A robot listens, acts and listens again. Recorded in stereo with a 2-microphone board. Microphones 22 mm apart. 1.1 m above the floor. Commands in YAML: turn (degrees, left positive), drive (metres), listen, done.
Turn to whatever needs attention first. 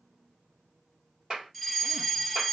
turn: 30
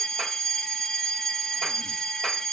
turn: 145
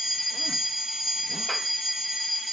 done: "Found it: a fire alarm, straight ahead."